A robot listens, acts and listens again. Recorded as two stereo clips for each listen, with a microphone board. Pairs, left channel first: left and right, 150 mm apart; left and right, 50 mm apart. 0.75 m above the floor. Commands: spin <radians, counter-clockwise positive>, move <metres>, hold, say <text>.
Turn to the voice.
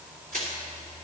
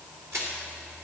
hold
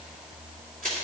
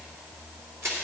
hold
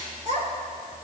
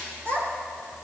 spin -0.87
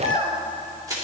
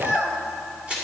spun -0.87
spin -1.22
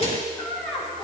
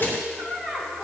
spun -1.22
say Facing the child speaking.